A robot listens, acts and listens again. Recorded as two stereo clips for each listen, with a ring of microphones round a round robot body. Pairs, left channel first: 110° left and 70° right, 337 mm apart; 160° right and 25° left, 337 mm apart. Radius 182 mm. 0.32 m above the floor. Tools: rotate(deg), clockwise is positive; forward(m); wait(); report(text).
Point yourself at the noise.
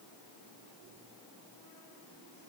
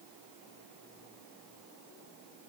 wait()
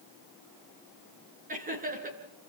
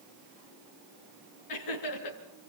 rotate(135)
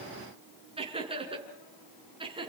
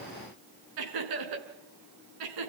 rotate(-10)
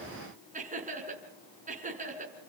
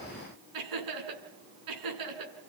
report("Found it: laughter, straight ahead, over 4 m away.")